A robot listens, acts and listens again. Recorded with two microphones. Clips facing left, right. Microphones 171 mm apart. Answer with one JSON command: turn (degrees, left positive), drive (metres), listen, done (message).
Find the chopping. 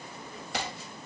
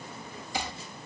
{"turn": 70}
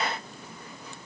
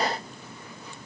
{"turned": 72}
{"listen": true}
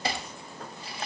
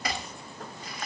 {"turn": 30}
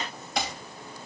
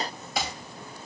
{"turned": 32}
{"done": "Found it: chopping, straight ahead."}